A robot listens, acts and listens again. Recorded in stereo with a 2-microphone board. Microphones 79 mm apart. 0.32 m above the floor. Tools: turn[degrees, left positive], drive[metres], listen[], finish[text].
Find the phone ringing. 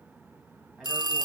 Thought: The phone ringing: about 65° left or 115° left.
Action: turn[65]
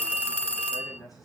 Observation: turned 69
Thought: So it is at 15° left.
Action: turn[15]
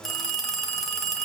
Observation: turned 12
Action: finish[Facing the phone ringing, under 1 m away.]